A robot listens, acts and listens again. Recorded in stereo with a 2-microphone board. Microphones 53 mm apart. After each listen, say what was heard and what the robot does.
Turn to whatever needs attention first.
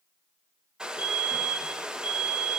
The fire alarm: about 25° right or 155° right. Turn 25° right.
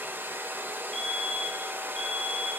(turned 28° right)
Found it: a fire alarm, straight ahead, 2 to 4 m away.